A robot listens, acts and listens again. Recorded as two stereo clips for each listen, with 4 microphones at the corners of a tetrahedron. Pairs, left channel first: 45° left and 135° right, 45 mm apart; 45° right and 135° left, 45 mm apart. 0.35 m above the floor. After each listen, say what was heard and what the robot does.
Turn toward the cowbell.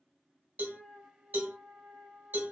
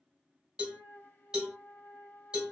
The cowbell: 160° right. Turn 160° right.
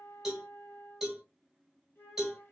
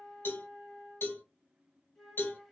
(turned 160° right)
The cowbell is now 50° right. Turn 50° right.
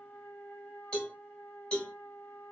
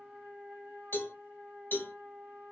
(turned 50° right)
The cowbell is now 15° right. Turn 15° right.
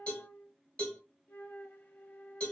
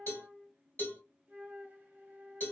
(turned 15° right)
Found it: a cowbell, straight ahead, 1 to 2 m away.